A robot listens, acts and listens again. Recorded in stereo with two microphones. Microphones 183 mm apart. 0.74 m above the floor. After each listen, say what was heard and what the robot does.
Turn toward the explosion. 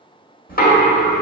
Keep listening.
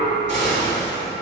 The explosion: about 75° left or 105° left. Turn 75° left.
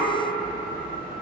Keep listening.
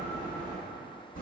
I heard an explosion, but can't make it out now. It was about straight ahead or 30° left.